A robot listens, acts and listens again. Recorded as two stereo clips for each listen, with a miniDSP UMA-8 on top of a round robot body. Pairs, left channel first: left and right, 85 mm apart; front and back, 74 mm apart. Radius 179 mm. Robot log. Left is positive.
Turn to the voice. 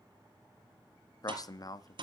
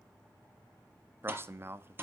note: The man speaking: 125° left.
cmd yaw +125
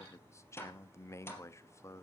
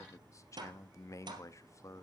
note: The man speaking is now 40° left.
cmd yaw +40
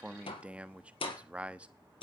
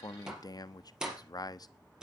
note: The man speaking is now 15° right.
cmd yaw -15
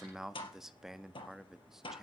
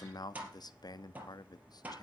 end: Facing the man speaking.